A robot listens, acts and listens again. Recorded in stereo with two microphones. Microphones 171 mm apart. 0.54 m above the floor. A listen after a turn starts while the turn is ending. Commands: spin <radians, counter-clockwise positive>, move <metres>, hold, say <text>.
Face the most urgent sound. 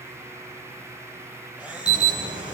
spin -0.70
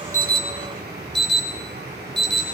spin -1.75
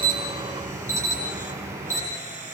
spin -0.26
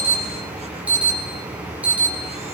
spin -0.17
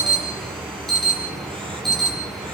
say Found it: an alarm, straight ahead.